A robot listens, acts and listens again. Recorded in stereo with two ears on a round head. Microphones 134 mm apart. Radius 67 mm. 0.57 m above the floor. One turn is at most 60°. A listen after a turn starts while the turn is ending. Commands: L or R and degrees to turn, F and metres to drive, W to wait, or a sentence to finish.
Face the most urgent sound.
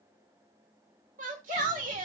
R55
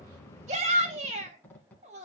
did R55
R55
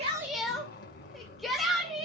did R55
Facing the shout.